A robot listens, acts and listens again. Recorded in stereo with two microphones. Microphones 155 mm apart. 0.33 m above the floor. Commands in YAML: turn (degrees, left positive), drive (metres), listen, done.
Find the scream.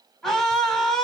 turn: 30
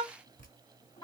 turn: 150
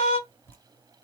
turn: 60
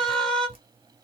done: "Found it: a scream, straight ahead."